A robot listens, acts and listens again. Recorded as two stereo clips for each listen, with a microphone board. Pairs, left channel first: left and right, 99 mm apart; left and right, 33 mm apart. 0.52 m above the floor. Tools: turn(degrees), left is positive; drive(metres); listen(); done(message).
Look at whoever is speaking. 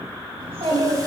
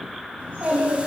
turn(degrees=-75)
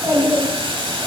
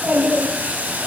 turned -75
turn(degrees=-30)
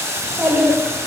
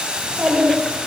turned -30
turn(degrees=-15)
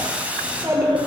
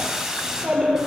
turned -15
turn(degrees=-25)
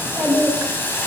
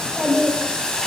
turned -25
done("Found it: a child speaking, straight ahead, 1 to 2 m away.")